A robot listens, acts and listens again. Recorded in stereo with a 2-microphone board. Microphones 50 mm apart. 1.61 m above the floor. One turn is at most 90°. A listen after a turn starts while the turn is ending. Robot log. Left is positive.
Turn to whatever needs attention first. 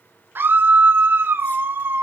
note: The scream: about 45° right or 135° right.
cmd yaw -45
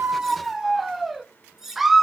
end: Found it: a scream, straight ahead, under 1 m away.